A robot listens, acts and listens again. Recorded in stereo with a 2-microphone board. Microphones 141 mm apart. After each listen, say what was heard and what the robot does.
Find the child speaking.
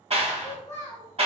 The child speaking: about 20° left or 160° left. Turn 20° left.
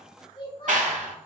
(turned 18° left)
So it is at 145° left. Turn 145° left.
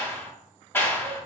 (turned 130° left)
Nothing new. It was at 15° left. Turn 15° left.
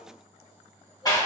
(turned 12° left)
Keep listening.
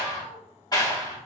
Found it: a child speaking, straight ahead, 1 to 2 m away.